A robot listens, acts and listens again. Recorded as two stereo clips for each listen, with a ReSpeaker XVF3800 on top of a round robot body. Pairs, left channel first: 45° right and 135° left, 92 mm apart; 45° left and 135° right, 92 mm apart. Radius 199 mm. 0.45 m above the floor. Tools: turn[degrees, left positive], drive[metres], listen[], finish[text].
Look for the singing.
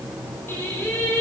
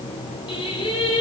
Thought: The singing: 25° left.
Action: turn[25]
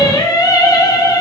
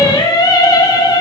Action: finish[Found it: singing, straight ahead, 2 to 4 m away.]